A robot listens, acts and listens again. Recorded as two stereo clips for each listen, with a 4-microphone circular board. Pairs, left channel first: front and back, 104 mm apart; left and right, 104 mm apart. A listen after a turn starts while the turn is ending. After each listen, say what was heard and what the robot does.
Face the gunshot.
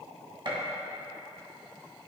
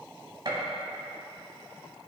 The gunshot: 140° right. Turn 140° right.
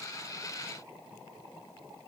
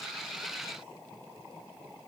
I heard a gunshot from this way, but can't make it out now.